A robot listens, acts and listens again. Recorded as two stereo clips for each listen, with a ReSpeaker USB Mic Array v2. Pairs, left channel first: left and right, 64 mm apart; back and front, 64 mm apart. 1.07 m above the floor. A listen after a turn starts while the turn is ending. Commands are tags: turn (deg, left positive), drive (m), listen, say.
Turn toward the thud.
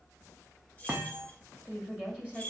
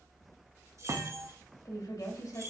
<turn deg="-30"/>
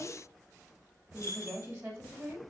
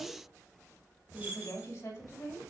<say>I heard a thud from this way, but can't make it out now.</say>